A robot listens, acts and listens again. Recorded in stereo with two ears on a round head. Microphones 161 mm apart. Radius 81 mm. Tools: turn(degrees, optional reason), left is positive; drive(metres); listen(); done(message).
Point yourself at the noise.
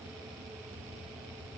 listen()
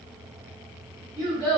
turn(degrees=-20, reason="The child speaking: about 20° right or 160° right.")
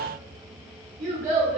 turn(degrees=-135, reason="So it is at 135° right.")
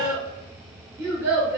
turn(degrees=-20, reason="The child speaking is now 20° right.")
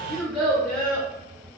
done("Found it: a child speaking, straight ahead.")